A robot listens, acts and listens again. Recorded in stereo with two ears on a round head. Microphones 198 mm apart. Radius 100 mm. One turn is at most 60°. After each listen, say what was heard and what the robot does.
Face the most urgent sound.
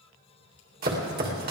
Keep listening.
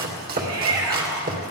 Turn 60° right.
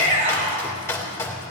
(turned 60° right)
So it is at 35° right. Turn 35° right.
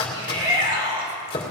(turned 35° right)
The shout is now 25° right. Turn 25° right.
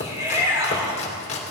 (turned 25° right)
The shout is now 15° right. Turn 15° right.
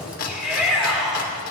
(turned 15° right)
Facing the shout, over 4 m away.